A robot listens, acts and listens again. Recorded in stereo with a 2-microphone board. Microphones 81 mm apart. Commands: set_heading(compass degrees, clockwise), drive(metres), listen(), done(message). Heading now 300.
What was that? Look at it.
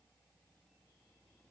listen()
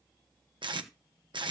set_heading(30)
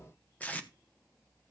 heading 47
set_heading(27)
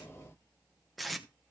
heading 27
done("Found it: tape being pulled, straight ahead, 1 to 2 m away.")